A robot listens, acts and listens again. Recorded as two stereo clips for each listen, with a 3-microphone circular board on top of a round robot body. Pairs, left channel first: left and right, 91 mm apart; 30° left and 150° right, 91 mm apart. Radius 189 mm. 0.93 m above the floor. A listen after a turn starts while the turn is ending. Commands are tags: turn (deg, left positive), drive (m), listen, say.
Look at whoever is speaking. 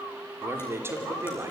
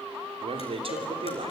<turn deg="-155"/>
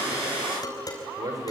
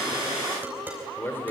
<turn deg="-40"/>
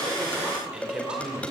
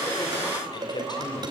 <turn deg="-10"/>
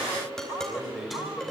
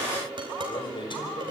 <say>Facing the man speaking, over 4 m away.</say>